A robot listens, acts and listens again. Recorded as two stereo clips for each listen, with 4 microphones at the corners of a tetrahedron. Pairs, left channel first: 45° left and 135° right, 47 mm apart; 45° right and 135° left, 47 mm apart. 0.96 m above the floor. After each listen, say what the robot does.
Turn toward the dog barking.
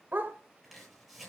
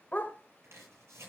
Turn 90° right.
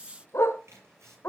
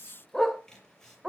Turn 55° left.
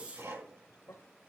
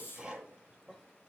Keep listening.
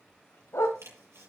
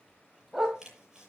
Turn 55° left.
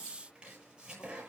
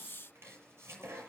Keep listening.
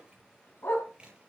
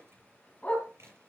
Turn 15° left.
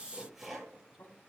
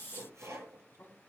Keep listening.
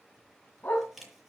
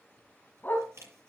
Facing the dog barking.